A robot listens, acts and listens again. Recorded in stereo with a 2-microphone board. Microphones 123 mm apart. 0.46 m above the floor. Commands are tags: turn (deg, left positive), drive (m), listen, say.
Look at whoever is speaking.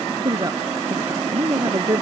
<turn deg="-30"/>
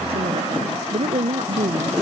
<turn deg="-125"/>
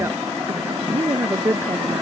<turn deg="-20"/>
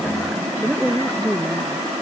<say>Found it: a woman speaking, straight ahead.</say>